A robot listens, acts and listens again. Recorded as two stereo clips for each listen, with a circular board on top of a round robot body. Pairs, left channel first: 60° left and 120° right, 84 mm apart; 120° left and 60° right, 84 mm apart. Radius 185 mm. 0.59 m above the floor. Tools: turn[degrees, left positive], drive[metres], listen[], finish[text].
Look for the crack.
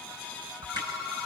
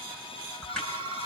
Thought: The crack: 155° right.
Action: turn[-155]
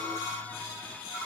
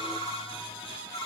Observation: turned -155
Action: finish[I heard a crack from this way, but can't make it out now.]